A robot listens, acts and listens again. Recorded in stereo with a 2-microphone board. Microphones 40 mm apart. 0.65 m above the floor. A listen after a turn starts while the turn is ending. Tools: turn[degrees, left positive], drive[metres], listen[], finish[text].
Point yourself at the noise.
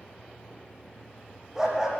Action: turn[-30]
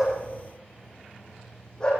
Thought: So it is at 25° left.
Action: turn[25]
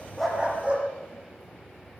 Thought: The dog barking is now 30° right.
Action: turn[-30]
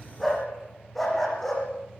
Action: finish[Found it: a dog barking, straight ahead, over 4 m away.]